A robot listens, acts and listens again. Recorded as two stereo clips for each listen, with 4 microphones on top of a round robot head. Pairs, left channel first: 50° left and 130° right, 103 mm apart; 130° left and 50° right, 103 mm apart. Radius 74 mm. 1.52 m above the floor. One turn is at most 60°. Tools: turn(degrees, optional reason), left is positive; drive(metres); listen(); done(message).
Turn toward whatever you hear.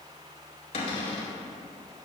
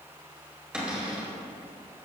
turn(degrees=30, reason="The cupboard door: 30° left.")
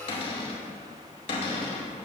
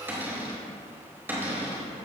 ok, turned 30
turn(degrees=20, reason="The cupboard door is now 20° left.")
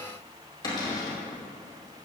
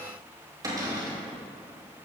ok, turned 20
done("Facing the cupboard door.")